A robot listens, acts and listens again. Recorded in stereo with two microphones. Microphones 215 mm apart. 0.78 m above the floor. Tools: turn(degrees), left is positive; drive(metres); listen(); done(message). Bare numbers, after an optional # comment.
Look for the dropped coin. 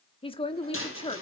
# The dropped coin: about 75° left or 105° left.
turn(75)
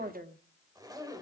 listen()
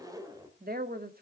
done("I heard a dropped coin, but can't make it out now. It was about straight ahead or 30° left.")